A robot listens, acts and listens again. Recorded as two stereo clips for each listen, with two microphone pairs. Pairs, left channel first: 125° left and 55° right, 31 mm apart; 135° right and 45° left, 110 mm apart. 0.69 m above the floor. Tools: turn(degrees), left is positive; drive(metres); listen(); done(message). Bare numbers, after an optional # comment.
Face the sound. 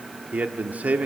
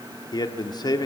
# The man speaking: 85° right.
turn(-85)
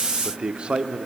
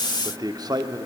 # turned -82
done("Facing the man speaking, 1 to 2 m away.")